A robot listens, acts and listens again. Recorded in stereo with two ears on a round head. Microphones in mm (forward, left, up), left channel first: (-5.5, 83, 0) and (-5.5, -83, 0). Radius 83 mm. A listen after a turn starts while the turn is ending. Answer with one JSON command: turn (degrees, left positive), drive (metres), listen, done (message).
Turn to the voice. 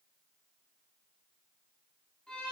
{"listen": true}
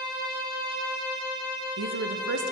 {"turn": -70}
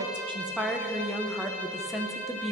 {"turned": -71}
{"done": "Found it: a woman speaking, straight ahead, under 1 m away."}